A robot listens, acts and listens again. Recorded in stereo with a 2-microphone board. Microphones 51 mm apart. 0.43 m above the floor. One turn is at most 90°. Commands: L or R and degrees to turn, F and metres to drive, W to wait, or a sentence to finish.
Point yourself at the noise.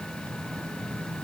W
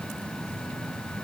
W
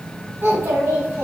R70
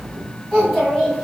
R15
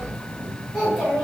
R10
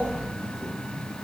W
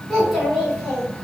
Found it: a child speaking, straight ahead.